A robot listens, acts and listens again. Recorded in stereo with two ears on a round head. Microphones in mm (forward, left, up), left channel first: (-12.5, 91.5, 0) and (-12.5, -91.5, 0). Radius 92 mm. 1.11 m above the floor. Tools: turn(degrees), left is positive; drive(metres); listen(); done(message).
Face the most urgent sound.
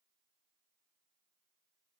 listen()
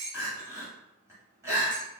turn(degrees=-30)
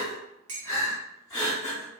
turn(degrees=15)
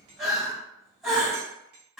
done("Facing the crying, 1 to 2 m away.")